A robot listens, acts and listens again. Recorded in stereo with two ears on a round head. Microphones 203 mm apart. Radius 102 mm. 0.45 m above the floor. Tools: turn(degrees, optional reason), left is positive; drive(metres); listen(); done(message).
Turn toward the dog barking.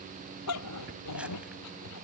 turn(degrees=90)
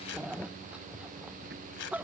done("Facing the dog barking.")